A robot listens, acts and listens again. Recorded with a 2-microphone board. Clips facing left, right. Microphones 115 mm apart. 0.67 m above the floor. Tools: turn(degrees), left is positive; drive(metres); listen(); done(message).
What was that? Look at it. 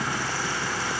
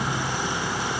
listen()
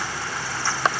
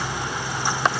listen()
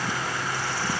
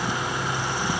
done("I can't make out anything to turn to.")